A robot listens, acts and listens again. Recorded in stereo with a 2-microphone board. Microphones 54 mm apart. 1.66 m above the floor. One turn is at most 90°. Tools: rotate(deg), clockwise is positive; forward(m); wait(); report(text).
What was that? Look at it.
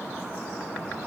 wait()
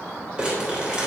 rotate(20)
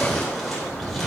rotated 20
report("Facing the crumpling.")